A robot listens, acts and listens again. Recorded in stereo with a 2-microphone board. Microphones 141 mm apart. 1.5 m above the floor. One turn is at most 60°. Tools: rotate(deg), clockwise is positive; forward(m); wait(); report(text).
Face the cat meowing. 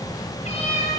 rotate(-45)
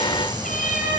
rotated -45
rotate(-60)
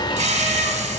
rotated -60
rotate(-20)
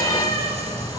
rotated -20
rotate(-25)
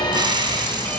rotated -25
wait()
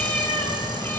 rotate(-10)
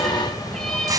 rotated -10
report("Facing the cat meowing.")